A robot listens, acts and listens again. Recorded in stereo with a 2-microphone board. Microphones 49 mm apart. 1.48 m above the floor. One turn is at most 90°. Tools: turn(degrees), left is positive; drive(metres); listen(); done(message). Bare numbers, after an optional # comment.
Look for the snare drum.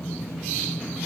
listen()
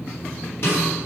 # The snare drum: about 50° left or 130° left.
turn(50)
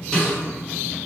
done("Found it: a snare drum, straight ahead.")